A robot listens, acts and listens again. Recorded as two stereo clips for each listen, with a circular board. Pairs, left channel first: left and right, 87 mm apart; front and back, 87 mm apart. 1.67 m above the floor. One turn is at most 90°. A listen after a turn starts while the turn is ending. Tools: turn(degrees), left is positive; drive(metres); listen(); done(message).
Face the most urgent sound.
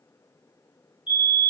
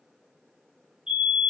turn(degrees=90)
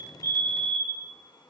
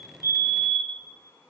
turn(degrees=-10)
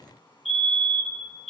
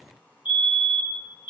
done("Found it: a fire alarm, straight ahead.")